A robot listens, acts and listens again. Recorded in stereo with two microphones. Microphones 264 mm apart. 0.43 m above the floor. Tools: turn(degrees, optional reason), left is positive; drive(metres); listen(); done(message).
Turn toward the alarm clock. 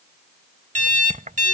turn(degrees=-30, reason="The alarm clock: about 30° right or 150° right.")
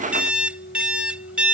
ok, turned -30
done("Facing the alarm clock.")